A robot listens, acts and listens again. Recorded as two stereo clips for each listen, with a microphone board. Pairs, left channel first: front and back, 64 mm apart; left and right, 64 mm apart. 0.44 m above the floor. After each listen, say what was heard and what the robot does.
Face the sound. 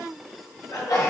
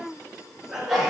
Found it: a sneeze, straight ahead.